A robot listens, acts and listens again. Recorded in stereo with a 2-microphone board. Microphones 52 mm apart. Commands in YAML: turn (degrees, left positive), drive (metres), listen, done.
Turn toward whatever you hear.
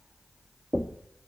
turn: -25
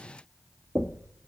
turn: -130
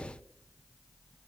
turn: -35
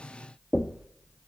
turn: -15
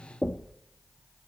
done: "Facing the knocking."